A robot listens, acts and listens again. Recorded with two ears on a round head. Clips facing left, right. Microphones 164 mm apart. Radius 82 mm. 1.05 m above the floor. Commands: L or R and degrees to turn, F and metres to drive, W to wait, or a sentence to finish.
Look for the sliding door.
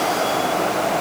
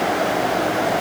W
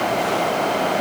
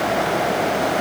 W
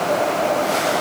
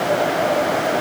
I can't make out a sliding door to turn to.